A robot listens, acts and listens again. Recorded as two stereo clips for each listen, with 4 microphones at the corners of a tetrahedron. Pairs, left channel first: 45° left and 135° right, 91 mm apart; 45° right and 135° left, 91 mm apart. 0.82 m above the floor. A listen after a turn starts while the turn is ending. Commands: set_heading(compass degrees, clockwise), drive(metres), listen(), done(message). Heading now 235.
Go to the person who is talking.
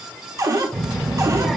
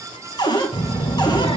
set_heading(280)
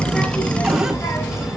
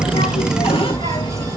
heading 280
set_heading(290)
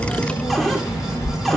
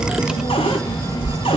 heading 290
drive(1.0)
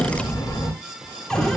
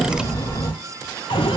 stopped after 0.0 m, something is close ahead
done("Something is in my way. I am facing the child speaking but have not reached it.")